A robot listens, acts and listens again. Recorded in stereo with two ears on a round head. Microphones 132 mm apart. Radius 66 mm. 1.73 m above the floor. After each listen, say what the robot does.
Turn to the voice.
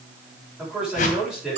Turn 30° right.
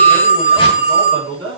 Turn 145° right.
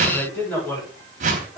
Turn 15° left.
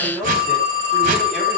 Facing the man speaking, over 4 m away.